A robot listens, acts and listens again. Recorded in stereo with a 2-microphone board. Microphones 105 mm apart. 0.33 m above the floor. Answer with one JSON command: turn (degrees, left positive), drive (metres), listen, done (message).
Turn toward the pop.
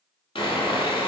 {"listen": true}
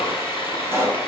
{"turn": -25}
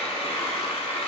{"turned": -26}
{"listen": true}
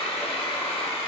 {"done": "I heard a pop, but can't make it out now. It was about straight ahead or 125° right."}